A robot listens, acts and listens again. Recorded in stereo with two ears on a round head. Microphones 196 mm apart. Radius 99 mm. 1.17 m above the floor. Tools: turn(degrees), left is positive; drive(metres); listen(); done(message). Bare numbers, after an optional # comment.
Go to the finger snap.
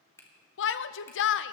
turn(30)
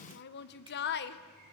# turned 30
listen()
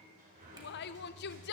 listen()
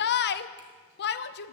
done("I heard a finger snap, but can't make it out now. It was about 15° right or 135° left. I did not reach it.")